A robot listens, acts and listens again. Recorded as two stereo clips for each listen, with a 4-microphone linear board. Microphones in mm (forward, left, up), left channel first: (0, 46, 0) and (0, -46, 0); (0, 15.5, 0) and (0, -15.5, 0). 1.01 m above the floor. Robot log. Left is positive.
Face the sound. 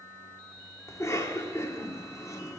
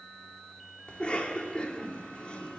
note: The cough: about 35° left or 145° left.
cmd yaw +35
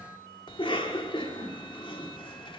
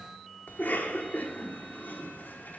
note: So it is at 110° left.
cmd yaw +110
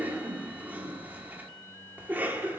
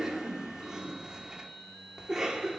note: The cough is now 20° right.
cmd yaw -20
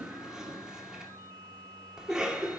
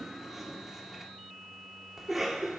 end: Found it: a cough, straight ahead.